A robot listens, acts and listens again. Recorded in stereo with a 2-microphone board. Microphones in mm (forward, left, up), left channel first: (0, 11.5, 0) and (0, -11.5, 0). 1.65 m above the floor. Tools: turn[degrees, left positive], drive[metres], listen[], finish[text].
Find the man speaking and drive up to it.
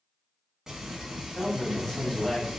Action: turn[30]
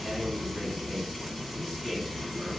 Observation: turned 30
Action: listen[]
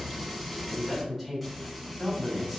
Thought: So it is at 20° right.
Action: turn[-20]
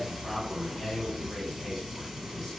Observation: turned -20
Action: drive[1.0]
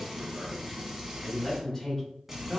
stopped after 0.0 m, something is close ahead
Action: finish[Blocked. The man speaking is further on, straight ahead.]